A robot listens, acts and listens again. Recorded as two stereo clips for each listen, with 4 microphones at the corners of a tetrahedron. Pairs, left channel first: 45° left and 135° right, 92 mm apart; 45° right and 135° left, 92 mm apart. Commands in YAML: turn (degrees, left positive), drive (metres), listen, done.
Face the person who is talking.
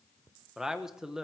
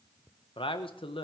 turn: -50
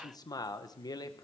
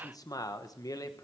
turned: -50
done: "Facing the man speaking."